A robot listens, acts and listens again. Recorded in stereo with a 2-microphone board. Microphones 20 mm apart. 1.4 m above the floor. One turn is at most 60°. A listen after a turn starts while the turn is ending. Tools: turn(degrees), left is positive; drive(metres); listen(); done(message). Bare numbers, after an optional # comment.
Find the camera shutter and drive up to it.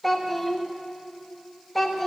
listen()
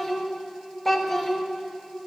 listen()
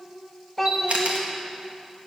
turn(-60)
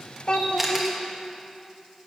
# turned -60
# So it is at 15° right.
turn(-15)
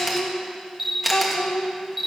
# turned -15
# The camera shutter is now 10° right.
turn(-10)
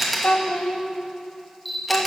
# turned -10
drive(1.0)
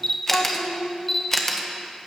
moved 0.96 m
# The camera shutter is now 15° left.
turn(15)
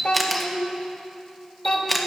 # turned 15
drive(1.0)
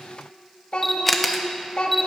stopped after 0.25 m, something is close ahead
done("Arrived at the camera shutter, straight ahead.")